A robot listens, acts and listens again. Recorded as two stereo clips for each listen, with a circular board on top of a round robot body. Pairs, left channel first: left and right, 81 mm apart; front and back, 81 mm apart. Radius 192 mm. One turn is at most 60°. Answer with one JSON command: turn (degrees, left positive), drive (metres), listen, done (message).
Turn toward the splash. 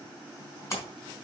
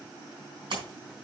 {"turn": 60}
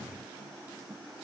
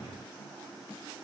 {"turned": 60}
{"turn": 60}
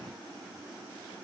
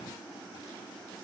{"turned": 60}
{"turn": 30}
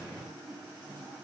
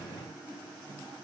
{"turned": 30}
{"done": "Facing where the splash came from. I can't hear it now."}